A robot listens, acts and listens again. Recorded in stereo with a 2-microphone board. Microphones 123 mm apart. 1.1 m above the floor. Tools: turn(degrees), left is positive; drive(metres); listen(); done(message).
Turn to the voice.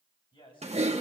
turn(degrees=40)
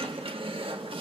listen()
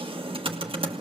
listen()
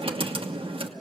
done("I heard a man speaking, but can't make it out now. It was about straight ahead or 100° left.")